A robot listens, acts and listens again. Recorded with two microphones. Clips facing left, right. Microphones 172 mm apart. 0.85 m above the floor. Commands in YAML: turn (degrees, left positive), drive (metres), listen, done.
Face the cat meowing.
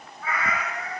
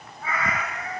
turn: -45
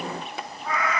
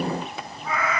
done: "Facing the cat meowing, 2 to 4 m away."